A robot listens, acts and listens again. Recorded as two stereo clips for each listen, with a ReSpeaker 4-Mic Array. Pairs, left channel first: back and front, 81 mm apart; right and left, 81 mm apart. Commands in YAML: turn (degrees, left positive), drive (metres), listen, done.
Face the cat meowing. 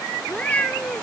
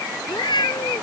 turn: -105
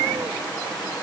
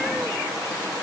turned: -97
turn: -10
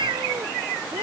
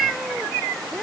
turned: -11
listen: true
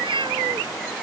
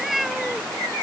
done: "Found it: a cat meowing, straight ahead."